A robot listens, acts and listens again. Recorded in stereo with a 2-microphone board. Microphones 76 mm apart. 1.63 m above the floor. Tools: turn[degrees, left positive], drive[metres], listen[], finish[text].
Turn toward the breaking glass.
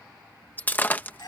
Thought: The breaking glass: about 25° left or 155° left.
Action: turn[25]
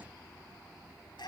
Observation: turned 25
Action: listen[]
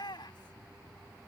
Action: finish[I heard breaking glass, but can't make it out now. It was about straight ahead or 130° left.]